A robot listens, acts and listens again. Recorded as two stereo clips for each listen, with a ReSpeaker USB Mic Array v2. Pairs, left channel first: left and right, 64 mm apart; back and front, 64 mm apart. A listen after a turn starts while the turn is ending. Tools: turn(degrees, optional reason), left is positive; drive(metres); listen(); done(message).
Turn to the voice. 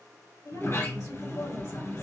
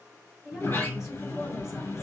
turn(degrees=80, reason="The woman speaking: 80° left.")
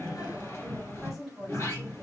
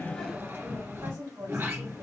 done("Found it: a woman speaking, straight ahead.")